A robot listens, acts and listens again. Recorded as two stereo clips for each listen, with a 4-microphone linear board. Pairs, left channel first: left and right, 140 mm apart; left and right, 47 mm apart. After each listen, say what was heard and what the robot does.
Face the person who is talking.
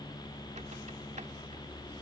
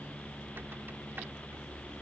Keep listening.
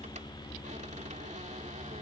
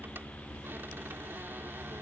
Keep listening.
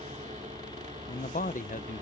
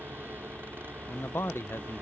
The man speaking: about 65° left or 115° left. Turn 65° left.
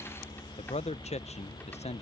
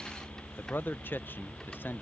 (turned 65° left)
So it is at 50° left. Turn 50° left.
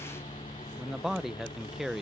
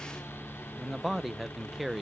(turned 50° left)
Found it: a man speaking, straight ahead.